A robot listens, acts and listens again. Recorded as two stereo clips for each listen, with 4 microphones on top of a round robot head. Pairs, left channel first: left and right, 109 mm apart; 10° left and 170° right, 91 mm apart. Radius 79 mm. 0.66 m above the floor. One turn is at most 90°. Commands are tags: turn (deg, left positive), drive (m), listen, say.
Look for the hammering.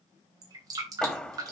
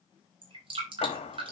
<turn deg="10"/>
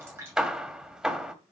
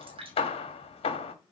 <say>Found it: hammering, straight ahead.</say>